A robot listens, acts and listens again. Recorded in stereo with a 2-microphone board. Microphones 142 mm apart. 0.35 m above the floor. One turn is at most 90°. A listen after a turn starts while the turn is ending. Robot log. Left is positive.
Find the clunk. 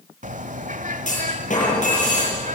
note: The clunk: about 60° left or 120° left.
cmd yaw +60
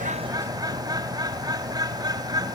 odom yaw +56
cmd idle
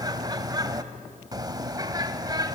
end: I heard a clunk, but can't make it out now. It was about 5° left or 60° left.